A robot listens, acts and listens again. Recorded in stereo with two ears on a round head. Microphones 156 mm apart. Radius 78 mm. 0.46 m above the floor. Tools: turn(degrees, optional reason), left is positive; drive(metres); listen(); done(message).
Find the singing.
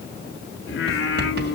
turn(degrees=65, reason="The singing: about 65° left or 115° left.")
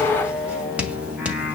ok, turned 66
done("Facing the singing.")